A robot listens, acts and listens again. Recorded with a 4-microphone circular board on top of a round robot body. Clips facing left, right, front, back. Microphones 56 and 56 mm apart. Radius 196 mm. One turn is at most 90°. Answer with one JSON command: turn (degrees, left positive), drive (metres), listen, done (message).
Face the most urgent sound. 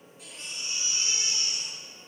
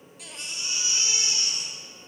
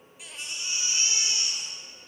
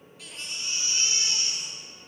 {"turn": -75}
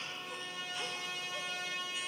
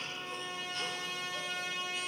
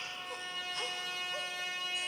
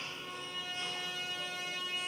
{"listen": true}
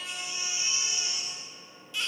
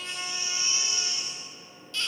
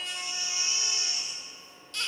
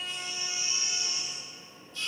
{"turn": 15}
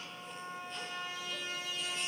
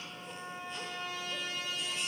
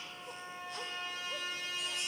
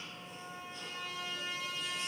{"listen": true}
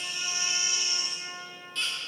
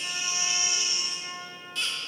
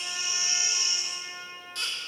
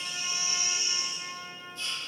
{"done": "Facing the baby crying, 1 to 2 m away."}